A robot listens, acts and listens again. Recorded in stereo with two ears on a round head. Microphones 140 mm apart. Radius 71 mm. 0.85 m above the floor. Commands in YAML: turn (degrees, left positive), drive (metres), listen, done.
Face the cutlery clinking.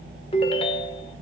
listen: true
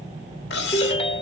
turn: 90
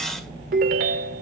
listen: true
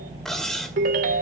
done: "Facing the cutlery clinking, 1 to 2 m away."